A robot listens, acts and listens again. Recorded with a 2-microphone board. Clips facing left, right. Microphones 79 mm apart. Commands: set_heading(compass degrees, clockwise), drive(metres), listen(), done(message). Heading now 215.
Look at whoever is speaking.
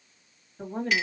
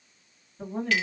set_heading(170)
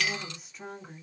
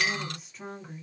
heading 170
done("Found it: a woman speaking, straight ahead, 1 to 2 m away.")